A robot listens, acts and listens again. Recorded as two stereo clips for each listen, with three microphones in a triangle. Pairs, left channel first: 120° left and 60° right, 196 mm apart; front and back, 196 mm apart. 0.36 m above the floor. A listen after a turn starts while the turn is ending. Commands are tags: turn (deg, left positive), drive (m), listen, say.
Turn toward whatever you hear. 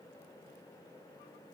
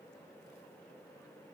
<listen/>
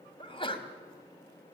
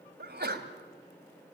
<turn deg="180"/>
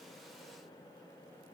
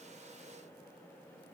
<say>I heard a sneeze from this way, but can't make it out now.</say>